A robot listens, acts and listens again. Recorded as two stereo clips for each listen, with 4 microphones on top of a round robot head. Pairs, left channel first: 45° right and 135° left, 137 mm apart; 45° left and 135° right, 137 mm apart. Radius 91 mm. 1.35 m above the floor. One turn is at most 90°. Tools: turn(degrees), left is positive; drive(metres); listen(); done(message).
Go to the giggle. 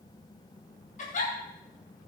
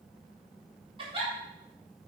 turn(degrees=-80)
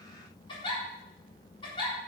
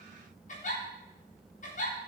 turn(degrees=10)
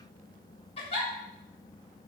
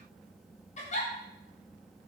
drive(metres=1.0)
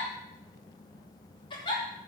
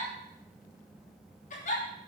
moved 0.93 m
turn(degrees=15)
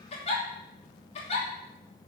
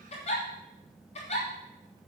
drive(metres=1.0)
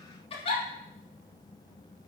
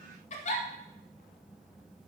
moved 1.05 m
drive(metres=1.0)
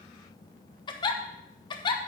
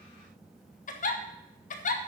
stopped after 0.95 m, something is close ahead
turn(degrees=15)
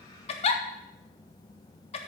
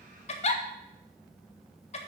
done("Arrived at the giggle, straight ahead.")